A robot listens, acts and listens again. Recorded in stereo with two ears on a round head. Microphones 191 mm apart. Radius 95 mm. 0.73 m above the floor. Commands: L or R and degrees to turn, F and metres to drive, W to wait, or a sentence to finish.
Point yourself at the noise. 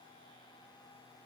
W
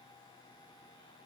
W
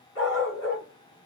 L65
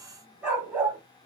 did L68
R10
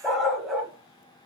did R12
Found it: a dog barking, straight ahead.